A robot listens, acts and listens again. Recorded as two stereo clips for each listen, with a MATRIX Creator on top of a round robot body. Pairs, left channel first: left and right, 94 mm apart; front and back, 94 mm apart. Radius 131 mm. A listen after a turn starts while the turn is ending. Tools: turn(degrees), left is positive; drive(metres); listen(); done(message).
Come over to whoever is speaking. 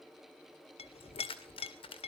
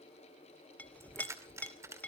listen()
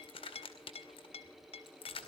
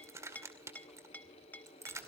listen()
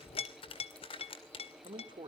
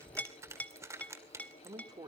turn(degrees=-130)
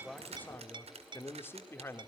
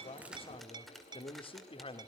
turn(degrees=25)
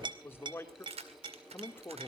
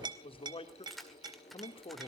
turn(degrees=25)
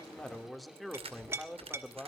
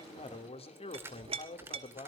drive(metres=1.0)
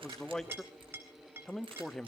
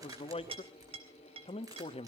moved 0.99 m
drive(metres=1.0)
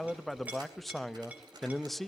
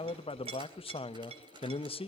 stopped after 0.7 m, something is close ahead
done("Arrived at the man speaking, straight ahead.")